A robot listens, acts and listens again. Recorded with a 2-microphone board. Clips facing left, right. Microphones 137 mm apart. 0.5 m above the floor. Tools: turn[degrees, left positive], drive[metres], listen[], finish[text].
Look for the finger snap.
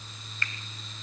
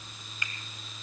Thought: The finger snap: about 15° right or 165° right.
Action: turn[-15]
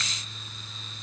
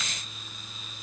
Action: listen[]
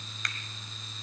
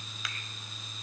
Action: finish[Found it: a finger snap, straight ahead.]